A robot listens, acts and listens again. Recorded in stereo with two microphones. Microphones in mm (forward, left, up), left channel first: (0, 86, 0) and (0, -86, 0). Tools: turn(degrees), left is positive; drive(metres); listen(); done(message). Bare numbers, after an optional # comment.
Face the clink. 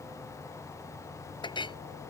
# The clink: about 25° left or 155° left.
turn(25)
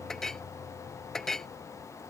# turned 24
done("Facing the clink.")